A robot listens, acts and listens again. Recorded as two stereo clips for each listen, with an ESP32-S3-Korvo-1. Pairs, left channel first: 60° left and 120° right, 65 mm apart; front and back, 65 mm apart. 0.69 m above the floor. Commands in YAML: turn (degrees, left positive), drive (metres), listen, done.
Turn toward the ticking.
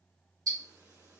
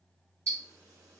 turn: -135
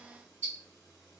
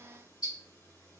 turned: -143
done: "Facing the ticking, 2 to 4 m away."